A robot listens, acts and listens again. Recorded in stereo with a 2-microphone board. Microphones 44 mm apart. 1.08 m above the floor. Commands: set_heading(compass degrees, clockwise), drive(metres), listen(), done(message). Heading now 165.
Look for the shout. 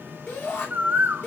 set_heading(110)
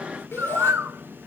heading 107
set_heading(42)
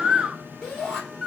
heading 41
done("Facing the shout.")